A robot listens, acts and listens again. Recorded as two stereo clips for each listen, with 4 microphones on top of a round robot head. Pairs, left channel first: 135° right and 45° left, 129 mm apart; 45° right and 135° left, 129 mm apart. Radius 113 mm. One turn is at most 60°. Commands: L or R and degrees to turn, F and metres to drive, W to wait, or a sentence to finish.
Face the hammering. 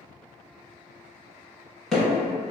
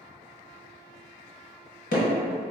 R45
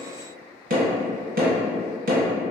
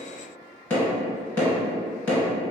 L30
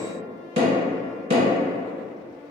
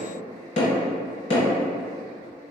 Found it: hammering, straight ahead, 1 to 2 m away.